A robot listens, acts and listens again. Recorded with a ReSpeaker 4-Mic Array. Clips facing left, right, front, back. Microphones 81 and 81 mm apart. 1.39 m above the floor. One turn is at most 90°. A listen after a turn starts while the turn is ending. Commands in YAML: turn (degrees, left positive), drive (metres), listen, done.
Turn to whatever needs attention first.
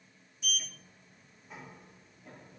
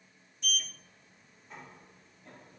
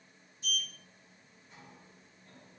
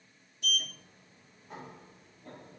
listen: true
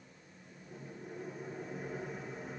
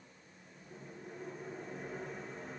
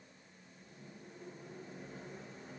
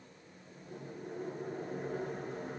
listen: true
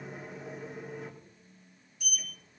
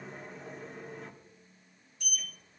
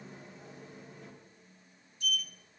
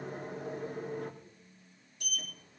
done: "I can't make out anything urgent, only a sliding door."